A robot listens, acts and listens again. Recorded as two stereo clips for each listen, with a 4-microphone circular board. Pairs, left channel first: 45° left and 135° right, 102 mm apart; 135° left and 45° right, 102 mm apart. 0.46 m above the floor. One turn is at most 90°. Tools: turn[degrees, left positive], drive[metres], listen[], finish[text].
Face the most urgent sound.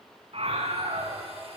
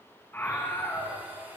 Thought: The scream: 155° right.
Action: turn[-90]
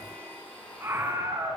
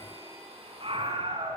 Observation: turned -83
Thought: The scream is now 70° right.
Action: turn[-70]
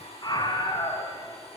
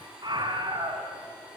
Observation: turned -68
Action: finish[Found it: a scream, straight ahead.]